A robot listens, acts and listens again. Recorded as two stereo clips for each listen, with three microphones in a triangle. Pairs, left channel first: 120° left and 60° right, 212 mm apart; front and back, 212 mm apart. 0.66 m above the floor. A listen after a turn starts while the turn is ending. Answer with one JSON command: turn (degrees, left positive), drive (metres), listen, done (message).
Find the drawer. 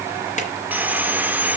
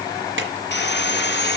{"turn": 170}
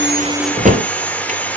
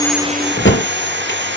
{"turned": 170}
{"turn": -10}
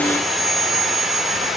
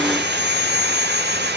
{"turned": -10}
{"listen": true}
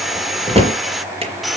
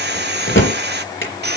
{"done": "Found it: a drawer, straight ahead."}